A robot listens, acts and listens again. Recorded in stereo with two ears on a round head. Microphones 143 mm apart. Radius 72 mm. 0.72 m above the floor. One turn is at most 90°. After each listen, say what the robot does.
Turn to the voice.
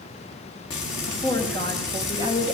Turn 25° left.
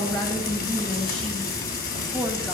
Turn 10° left.
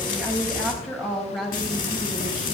Found it: a woman speaking, straight ahead.